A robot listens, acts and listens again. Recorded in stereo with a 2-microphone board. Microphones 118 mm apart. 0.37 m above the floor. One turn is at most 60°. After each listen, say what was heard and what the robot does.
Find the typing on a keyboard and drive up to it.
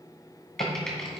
Turn 30° left.
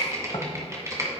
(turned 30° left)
So it is at 25° right. Turn 25° right.
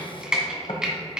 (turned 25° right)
Drive 1.0 m forward.
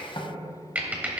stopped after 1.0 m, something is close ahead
The typing on a keyboard is now 15° right. Turn 15° right.
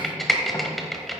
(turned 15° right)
Arrived at the typing on a keyboard, straight ahead.